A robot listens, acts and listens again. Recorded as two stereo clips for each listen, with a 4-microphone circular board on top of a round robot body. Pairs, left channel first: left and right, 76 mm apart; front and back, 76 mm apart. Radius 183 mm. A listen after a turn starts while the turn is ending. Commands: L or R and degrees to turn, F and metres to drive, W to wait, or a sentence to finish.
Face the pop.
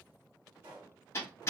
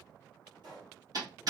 R145
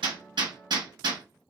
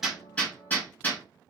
I heard a pop from this way, but can't make it out now.